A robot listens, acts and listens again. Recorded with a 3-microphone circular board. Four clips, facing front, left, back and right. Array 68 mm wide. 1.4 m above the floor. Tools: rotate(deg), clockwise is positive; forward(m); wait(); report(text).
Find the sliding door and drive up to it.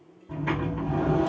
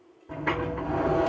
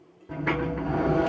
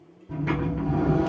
rotate(-135)
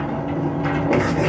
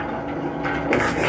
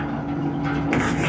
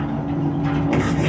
rotate(-65)
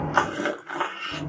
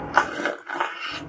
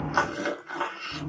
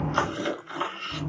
rotate(-35)
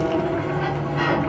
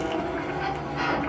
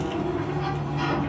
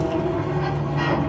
forward(1.0)
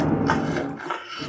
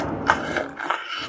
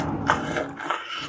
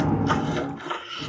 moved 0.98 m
rotate(-10)
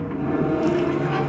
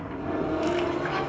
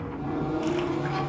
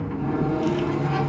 forward(1.0)
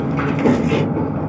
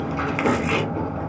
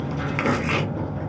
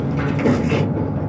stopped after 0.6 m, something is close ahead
report("I am next to the sliding door.")